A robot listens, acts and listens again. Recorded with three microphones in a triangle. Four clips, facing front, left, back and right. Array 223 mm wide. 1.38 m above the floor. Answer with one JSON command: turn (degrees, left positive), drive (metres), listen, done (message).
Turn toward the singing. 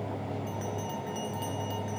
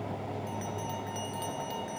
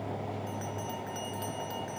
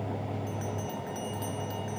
{"listen": true}
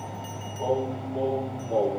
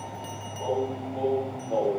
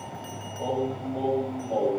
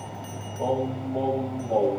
{"turn": -100}
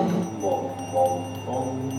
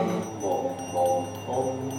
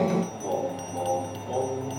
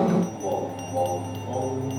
{"done": "Found it: singing, straight ahead, over 4 m away."}